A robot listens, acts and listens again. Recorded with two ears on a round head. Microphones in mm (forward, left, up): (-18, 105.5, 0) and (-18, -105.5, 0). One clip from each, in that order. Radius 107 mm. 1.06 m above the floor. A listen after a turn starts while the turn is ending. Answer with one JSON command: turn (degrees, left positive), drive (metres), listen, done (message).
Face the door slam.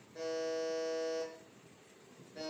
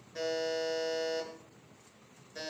{"listen": true}
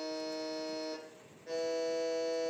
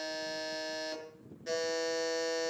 {"listen": true}
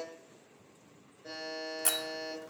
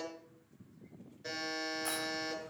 {"turn": 60}
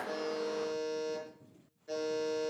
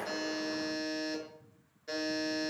{"listen": true}
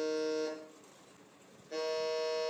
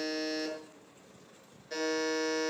{"done": "I heard a door slam, but can't make it out now. It was about straight ahead or 60° left."}